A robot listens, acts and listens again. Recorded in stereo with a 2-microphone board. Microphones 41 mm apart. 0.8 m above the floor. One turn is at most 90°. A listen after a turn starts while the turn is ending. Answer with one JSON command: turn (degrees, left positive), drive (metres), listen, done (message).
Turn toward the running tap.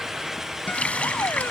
{"turn": 30}
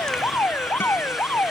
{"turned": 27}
{"listen": true}
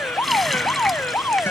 {"listen": true}
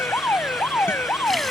{"done": "I heard a running tap, but can't make it out now. It was about 5° left or 120° left."}